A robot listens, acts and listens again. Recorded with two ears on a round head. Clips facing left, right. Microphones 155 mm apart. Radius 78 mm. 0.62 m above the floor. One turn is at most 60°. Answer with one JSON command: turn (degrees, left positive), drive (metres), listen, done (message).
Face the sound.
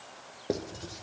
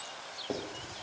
{"turn": 40}
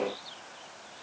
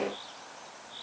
{"listen": true}
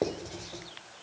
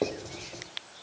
{"done": "Facing the writing, 2 to 4 m away."}